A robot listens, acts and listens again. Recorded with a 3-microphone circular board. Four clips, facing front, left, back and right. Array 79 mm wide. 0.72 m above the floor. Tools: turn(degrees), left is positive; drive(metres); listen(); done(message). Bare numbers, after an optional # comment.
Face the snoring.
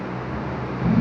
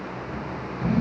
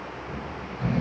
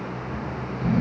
# The snoring: 160° left.
turn(160)
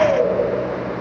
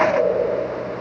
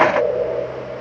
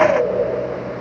# The snoring is now 35° right.
turn(-35)
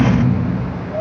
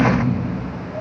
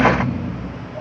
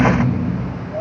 # The snoring is now 10° right.
turn(-10)
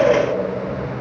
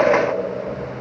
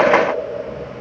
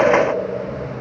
done("Found it: snoring, straight ahead.")